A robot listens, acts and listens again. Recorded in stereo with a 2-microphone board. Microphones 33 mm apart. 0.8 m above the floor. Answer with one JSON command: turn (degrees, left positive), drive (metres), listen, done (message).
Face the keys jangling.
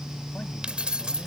{"turn": -25}
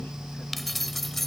{"turn": 10}
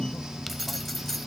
{"listen": true}
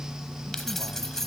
{"turn": 15}
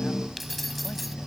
{"listen": true}
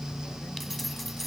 {"listen": true}
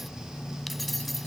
{"done": "Facing where the keys jangling came from. I can't hear it now."}